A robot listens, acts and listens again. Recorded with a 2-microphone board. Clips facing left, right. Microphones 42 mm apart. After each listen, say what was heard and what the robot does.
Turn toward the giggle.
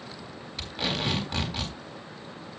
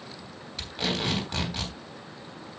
Keep listening.
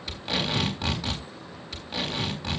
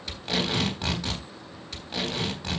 Keep listening.
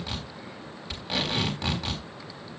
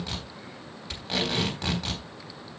I can't make out a giggle to turn to.